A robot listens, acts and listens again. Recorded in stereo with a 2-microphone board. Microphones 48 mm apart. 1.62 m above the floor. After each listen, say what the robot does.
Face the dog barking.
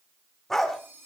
Turn 30° left.
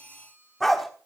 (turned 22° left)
Turn 30° left.
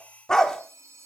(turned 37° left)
Turn 30° left.
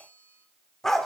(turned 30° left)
Turn 30° left.
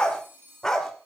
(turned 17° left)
Turn 30° left.
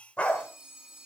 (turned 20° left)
Turn 155° left.
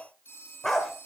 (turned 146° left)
Found it: a dog barking, straight ahead.